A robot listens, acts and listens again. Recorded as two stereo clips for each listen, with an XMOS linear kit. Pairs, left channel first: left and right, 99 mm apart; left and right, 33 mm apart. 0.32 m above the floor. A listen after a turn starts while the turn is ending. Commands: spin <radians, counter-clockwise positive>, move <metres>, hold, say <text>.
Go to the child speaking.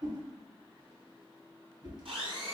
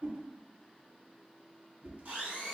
hold
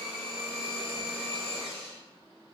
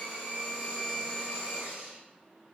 hold
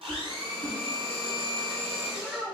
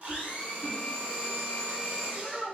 spin -0.52
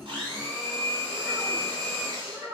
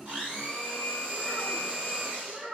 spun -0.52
spin -2.36
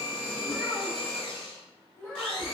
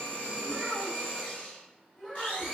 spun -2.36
spin 0.35
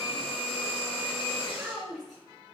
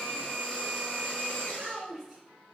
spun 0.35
move 1.0
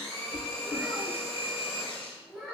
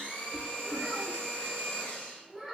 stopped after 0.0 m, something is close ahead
say Something is in my way. I am facing the child speaking but have not reached it.